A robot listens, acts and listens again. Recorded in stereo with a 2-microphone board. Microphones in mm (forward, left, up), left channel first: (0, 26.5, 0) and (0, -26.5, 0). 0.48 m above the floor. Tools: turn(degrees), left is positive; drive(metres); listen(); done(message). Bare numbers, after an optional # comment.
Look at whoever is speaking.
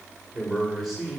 turn(-30)
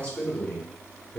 # So it is at 30° left.
turn(30)
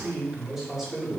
done("Facing the man speaking.")